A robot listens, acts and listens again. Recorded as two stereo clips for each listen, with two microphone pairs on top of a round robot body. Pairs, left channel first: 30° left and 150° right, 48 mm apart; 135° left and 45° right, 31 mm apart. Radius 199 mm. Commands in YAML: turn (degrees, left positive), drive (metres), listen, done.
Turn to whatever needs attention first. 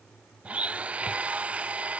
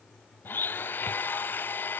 listen: true
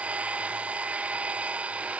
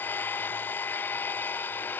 listen: true
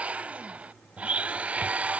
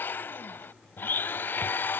done: "I can't make out anything urgent to turn to."